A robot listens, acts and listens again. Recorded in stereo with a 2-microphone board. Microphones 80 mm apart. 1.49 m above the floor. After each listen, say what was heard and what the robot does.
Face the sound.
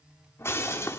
The breaking glass: about 30° left or 150° left. Turn 30° left.
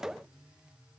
Keep listening.
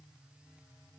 I heard breaking glass, but can't make it out now. It was about straight ahead or 120° left.